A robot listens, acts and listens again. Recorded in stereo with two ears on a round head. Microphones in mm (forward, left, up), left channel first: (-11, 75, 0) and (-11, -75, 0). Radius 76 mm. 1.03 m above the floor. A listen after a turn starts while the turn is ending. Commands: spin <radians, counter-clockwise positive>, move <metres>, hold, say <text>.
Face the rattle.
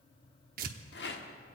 spin 1.13
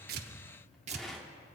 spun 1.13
say Found it: a rattle, straight ahead, 1 to 2 m away.